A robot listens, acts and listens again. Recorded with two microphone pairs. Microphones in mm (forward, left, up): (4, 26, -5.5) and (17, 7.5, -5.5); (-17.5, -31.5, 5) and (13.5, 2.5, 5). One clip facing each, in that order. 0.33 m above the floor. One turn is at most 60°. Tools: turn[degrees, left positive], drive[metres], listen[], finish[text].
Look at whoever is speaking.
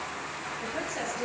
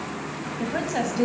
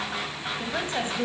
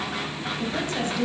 Thought: The woman speaking: 75° right.
Action: turn[-60]
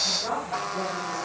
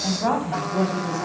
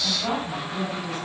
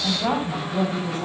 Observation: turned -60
Action: finish[Found it: a woman speaking, straight ahead.]